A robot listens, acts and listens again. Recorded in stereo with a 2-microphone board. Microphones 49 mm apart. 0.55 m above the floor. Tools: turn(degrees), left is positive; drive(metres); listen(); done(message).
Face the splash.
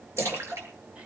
turn(degrees=-65)
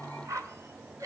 listen()
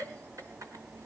done("I heard a splash, but can't make it out now. It was about straight ahead or 50° right.")